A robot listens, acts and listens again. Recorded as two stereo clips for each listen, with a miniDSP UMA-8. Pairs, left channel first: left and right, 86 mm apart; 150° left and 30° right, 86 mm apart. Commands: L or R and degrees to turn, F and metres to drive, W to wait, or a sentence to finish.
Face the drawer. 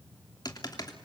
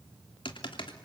W
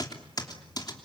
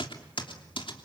W
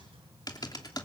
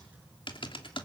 I can't make out a drawer to turn to.